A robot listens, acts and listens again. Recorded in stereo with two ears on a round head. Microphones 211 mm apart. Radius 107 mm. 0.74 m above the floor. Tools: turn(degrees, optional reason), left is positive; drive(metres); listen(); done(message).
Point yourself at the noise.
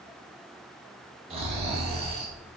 turn(degrees=-25, reason="The snoring: about 25° right or 155° right.")
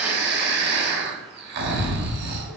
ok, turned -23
turn(degrees=-130, reason="So it is at 130° right.")
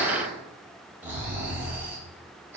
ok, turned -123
turn(degrees=-10, reason="The snoring is now 10° right.")
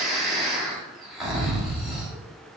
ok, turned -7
done("Found it: snoring, straight ahead.")